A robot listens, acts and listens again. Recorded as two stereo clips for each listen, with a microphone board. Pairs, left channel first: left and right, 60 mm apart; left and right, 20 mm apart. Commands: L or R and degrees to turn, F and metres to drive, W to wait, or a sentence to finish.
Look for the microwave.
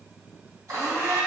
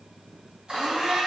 W
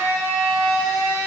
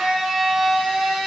W
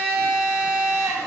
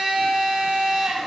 I can't make out a microwave, only a blender.